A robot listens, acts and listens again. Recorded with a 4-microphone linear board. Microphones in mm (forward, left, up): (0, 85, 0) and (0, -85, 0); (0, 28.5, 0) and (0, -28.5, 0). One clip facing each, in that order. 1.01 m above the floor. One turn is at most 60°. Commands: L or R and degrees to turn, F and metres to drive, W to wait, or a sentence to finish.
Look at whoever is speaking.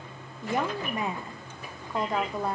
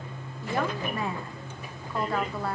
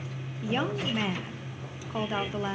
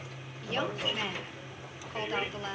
L20
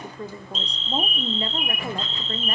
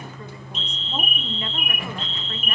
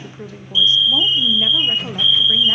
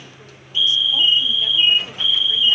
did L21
L60
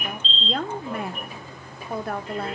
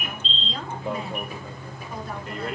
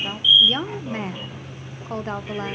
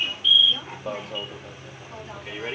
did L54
L60
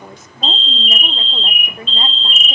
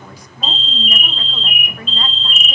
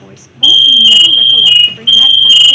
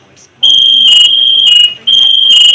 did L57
L30
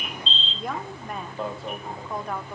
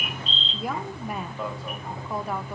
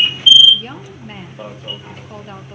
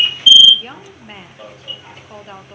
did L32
Found it: a woman speaking, straight ahead, under 1 m away.